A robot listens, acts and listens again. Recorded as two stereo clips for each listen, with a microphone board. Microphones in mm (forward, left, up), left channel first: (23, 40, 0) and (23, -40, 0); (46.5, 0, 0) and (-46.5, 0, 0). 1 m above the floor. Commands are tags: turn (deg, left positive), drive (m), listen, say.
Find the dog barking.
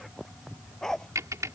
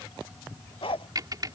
<say>Facing the dog barking.</say>